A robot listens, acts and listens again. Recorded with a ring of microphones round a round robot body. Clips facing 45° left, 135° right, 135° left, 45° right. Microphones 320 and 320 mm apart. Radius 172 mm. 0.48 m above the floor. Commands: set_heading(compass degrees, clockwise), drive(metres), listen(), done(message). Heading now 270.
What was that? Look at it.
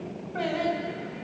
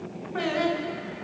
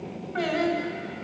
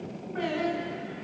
set_heading(105)
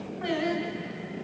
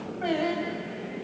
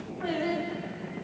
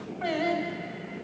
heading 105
set_heading(125)
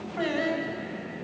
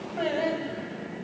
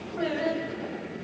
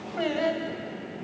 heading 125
set_heading(135)
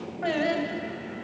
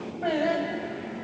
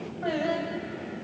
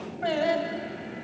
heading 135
done("Found it: singing, straight ahead, over 4 m away.")